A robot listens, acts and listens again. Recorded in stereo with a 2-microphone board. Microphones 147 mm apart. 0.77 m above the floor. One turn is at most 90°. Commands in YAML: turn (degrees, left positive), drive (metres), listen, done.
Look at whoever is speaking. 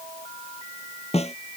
listen: true
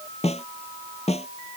listen: true
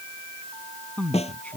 turn: 30
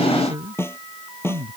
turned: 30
turn: -25
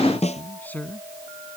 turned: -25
turn: 10
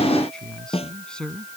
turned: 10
done: "Facing the man speaking."